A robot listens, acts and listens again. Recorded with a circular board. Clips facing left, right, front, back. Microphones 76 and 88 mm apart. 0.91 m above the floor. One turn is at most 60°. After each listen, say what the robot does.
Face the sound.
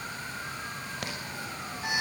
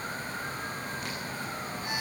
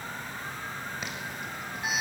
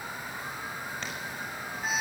Turn 60° left.
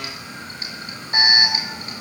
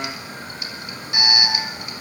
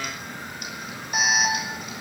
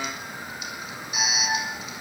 Turn 35° left.
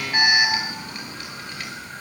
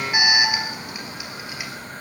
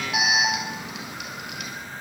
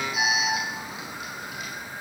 Turn 10° right.
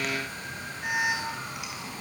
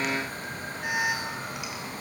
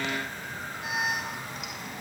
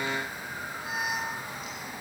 Found it: an alarm, straight ahead.